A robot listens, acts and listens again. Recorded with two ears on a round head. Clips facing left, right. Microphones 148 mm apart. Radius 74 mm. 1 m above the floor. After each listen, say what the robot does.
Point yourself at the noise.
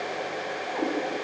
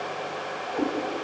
Turn 30° right.
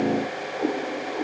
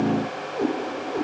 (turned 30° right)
Turn 135° right.
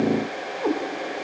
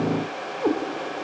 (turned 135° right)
Turn 10° right.
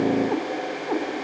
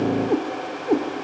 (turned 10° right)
Turn 35° right.
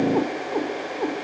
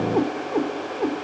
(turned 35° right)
Found it: a cat meowing, straight ahead.